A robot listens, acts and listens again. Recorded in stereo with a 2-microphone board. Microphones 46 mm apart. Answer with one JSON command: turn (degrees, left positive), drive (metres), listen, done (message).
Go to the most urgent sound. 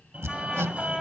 {"turn": -30}
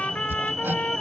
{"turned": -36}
{"drive": 1.0}
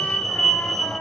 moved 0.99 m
{"drive": 1.0}
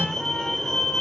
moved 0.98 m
{"turn": 15}
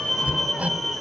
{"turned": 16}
{"drive": 1.0}
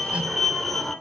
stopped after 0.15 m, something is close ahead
{"done": "Arrived at the fire alarm, straight ahead."}